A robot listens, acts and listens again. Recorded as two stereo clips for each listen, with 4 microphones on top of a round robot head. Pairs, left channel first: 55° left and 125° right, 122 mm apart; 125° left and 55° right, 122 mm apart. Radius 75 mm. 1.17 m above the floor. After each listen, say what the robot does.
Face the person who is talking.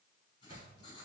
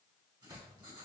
Keep listening.
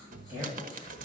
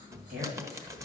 Turn 50° right.
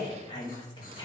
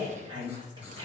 Found it: a woman speaking, straight ahead.